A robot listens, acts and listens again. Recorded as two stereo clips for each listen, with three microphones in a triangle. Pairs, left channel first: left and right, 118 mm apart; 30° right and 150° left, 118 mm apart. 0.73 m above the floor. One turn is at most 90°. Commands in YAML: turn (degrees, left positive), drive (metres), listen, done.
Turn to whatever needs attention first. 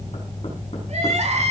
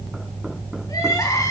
turn: -90
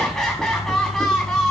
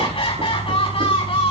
done: "Facing the crying, over 4 m away."